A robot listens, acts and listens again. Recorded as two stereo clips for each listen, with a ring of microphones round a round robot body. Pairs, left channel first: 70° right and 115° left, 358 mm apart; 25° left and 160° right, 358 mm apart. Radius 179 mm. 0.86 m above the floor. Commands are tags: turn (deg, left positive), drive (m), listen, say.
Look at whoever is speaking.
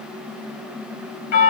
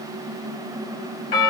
<listen/>
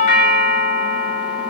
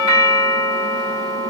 <listen/>
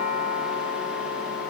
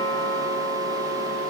<say>I can't make out anyone speaking, only a doorbell.</say>